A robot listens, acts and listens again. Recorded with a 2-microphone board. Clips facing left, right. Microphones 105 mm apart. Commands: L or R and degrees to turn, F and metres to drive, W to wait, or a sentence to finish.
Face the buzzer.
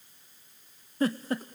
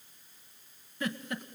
W
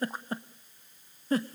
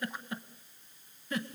W
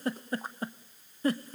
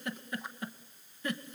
I can't make out a buzzer, only a giggle.